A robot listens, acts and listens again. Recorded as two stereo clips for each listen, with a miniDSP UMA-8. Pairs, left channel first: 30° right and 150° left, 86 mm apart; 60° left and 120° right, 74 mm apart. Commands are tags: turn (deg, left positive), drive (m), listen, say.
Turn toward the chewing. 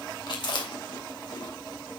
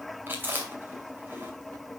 <turn deg="-60"/>
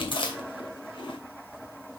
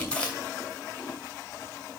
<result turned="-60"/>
<turn deg="-15"/>
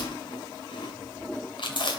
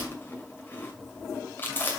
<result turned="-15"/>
<say>Facing the chewing.</say>